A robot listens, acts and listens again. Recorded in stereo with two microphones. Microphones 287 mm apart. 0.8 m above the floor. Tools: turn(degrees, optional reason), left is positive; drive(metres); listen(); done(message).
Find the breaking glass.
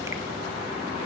listen()
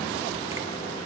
listen()
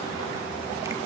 done("I can't make out breaking glass.")